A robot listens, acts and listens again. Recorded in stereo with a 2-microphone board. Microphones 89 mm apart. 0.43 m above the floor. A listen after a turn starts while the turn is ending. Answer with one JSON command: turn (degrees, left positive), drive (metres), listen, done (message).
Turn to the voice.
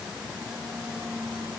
{"listen": true}
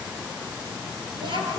{"turn": -70}
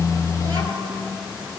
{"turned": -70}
{"turn": -40}
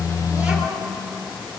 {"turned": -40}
{"turn": -15}
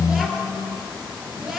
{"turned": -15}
{"done": "Facing the child speaking."}